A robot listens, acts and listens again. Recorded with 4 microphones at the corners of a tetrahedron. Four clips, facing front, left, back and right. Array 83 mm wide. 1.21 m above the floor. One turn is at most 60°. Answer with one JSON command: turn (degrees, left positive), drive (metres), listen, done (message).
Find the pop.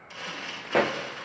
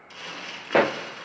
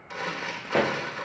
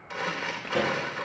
{"turn": 60}
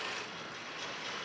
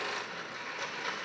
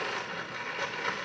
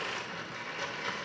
{"turn": 30}
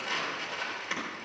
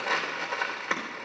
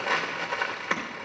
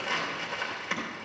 {"done": "I heard a pop from this way, but can't make it out now."}